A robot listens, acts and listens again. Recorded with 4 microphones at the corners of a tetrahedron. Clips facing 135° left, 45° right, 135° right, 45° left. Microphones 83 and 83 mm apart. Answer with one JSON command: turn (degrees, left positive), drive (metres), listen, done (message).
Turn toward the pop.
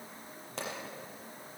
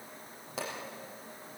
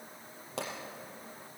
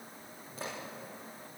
{"turn": -130}
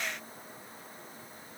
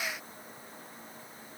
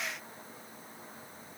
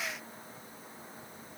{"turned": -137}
{"done": "Facing where the pop came from. I can't hear it now."}